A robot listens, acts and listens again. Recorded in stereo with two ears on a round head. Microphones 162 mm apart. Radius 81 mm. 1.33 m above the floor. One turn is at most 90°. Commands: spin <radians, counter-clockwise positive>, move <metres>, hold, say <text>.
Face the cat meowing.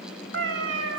spin -1.57
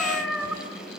say Facing the cat meowing, 2 to 4 m away.